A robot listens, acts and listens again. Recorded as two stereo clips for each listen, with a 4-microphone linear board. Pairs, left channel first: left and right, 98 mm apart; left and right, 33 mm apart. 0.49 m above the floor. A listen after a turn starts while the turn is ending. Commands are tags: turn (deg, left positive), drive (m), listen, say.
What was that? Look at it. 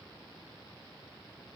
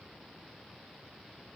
<listen/>
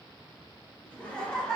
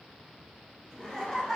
<turn deg="30"/>
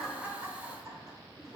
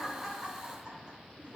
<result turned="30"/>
<turn deg="-40"/>
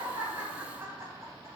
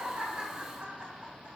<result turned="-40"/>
<turn deg="-35"/>
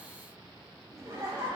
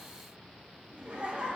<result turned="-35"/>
<turn deg="-30"/>
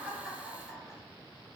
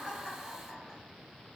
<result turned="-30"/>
<turn deg="15"/>
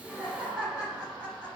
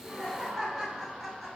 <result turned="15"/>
<say>Found it: laughter, straight ahead, 1 to 2 m away.</say>